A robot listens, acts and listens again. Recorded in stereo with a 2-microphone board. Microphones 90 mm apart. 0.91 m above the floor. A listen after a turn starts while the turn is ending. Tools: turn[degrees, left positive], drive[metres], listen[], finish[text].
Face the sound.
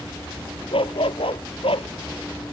Action: turn[90]
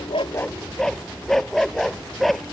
Action: finish[Facing the dog barking.]